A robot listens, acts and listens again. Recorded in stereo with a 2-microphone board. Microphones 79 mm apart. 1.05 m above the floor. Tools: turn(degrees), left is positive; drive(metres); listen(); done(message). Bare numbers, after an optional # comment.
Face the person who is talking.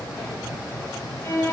listen()
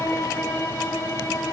listen()
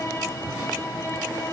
done("I can't make out anyone speaking to turn to.")